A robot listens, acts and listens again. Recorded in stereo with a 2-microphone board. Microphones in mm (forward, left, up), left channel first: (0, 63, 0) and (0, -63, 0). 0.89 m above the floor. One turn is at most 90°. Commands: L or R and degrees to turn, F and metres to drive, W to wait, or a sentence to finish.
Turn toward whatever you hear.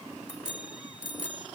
R75
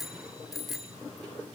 Facing the bicycle bell.